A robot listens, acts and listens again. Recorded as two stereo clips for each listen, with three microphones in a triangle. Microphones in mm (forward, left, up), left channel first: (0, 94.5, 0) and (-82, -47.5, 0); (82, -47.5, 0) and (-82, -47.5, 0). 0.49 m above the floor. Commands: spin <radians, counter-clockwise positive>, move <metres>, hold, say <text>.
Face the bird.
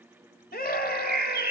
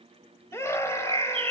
spin -2.18
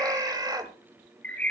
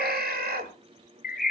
spin -0.35
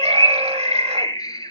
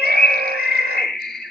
say Facing the bird.